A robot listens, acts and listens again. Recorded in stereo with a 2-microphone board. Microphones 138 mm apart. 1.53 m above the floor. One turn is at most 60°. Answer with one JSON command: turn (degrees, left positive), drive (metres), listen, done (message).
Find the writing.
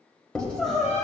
{"turn": 30}
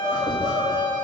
{"listen": true}
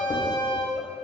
{"listen": true}
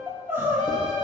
{"done": "I heard writing, but can't make it out now. It was about 20° right or 140° left."}